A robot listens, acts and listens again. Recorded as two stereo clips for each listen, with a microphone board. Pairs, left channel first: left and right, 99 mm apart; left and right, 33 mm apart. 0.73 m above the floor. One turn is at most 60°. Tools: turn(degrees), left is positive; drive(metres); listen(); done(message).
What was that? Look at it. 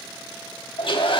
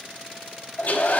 turn(degrees=60)
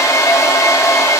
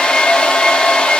turn(degrees=40)
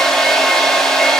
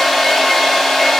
done("Found it: a hair dryer, straight ahead.")